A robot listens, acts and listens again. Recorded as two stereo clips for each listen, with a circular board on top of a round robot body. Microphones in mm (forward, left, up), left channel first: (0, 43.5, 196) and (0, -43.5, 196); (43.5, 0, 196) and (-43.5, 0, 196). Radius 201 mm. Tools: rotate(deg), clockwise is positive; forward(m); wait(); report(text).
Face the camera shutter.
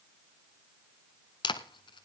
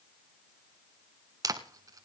rotate(-125)
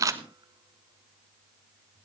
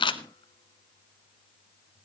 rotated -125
rotate(35)
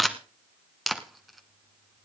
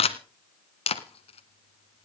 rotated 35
report("Found it: a camera shutter, straight ahead, under 1 m away.")